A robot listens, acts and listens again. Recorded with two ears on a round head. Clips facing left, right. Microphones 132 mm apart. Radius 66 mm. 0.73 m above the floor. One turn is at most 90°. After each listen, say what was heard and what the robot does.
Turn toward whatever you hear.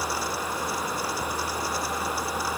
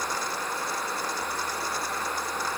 Keep listening.
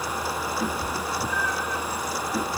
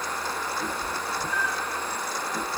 The cat meowing: about 70° left or 110° left. Turn 70° left.
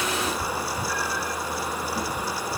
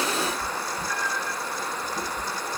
So it is at 45° left. Turn 45° left.
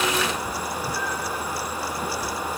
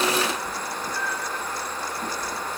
Found it: a cat meowing, straight ahead.